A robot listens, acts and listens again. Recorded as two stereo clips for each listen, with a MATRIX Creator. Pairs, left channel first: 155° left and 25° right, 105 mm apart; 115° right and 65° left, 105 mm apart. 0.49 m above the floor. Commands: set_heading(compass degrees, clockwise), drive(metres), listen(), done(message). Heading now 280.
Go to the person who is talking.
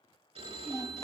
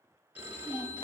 set_heading(65)
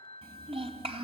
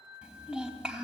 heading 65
set_heading(80)
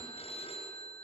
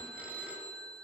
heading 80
listen()
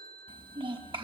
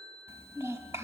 drive(1.0)
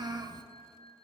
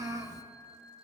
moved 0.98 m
set_heading(65)
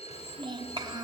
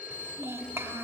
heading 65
drive(1.0)
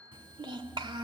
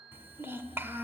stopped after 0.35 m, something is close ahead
done("Arrived at the child speaking, straight ahead.")